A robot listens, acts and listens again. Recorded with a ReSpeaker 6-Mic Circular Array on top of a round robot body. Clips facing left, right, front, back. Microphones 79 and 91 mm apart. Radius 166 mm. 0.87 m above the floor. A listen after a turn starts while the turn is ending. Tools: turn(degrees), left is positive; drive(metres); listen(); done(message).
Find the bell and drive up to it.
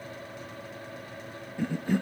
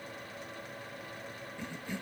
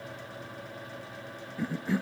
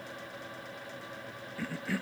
listen()
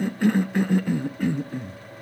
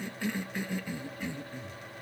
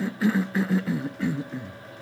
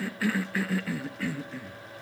listen()
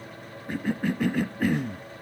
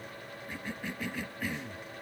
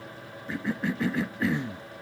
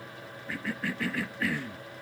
done("I can't make out a bell to turn to.")